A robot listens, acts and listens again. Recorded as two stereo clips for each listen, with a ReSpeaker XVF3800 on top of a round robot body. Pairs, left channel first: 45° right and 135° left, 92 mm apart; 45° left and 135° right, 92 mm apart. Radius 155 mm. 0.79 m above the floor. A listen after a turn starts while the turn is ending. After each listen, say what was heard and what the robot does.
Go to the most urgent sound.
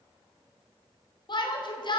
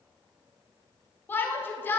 The shout: 20° right. Turn 20° right.
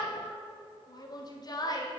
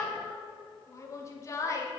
The shout is now 10° right. Turn 10° right.
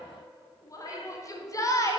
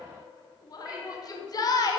Drive 1.0 m forward.
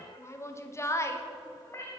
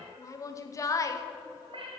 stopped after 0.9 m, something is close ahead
I am next to the shout.